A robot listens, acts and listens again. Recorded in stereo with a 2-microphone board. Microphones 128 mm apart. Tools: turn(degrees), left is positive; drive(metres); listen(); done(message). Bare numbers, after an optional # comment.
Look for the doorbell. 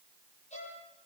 listen()
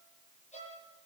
listen()
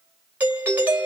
turn(-30)
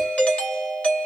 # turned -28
# So it is at 10° left.
turn(10)
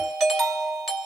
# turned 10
done("Found it: a doorbell, straight ahead.")